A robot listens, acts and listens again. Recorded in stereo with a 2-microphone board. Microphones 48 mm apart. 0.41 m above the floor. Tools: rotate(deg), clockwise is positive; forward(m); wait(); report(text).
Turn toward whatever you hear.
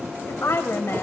rotate(-60)
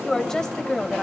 rotate(-15)
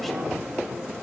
wait()
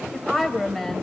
report("Facing the woman speaking.")